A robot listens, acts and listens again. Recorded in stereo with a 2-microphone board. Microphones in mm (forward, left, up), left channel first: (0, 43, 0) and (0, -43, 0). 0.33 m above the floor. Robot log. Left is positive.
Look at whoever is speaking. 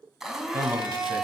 note: The man speaking: about 35° right or 145° right.
cmd yaw -35
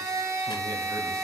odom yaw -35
cmd idle
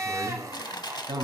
note: So it is at 105° right.
cmd yaw -105
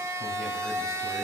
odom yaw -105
cmd idle
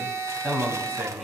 end: Facing the man speaking.